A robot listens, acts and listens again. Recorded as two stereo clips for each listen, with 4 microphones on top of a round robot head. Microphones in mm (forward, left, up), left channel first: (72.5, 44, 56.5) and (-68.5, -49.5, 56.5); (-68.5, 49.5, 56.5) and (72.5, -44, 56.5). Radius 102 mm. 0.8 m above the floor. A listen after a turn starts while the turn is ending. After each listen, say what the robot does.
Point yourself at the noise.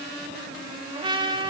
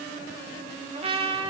Turn 85° right.
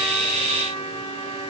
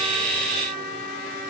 Turn 20° right.
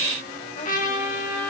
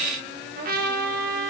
Facing the trumpet.